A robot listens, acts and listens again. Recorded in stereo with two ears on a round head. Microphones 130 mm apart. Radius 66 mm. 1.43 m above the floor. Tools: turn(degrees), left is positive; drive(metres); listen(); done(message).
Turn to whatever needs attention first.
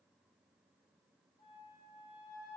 listen()
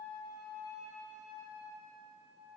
listen()
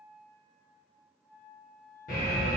turn(degrees=60)
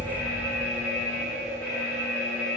turn(degrees=20)
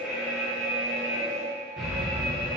done("Found it: an alarm, straight ahead.")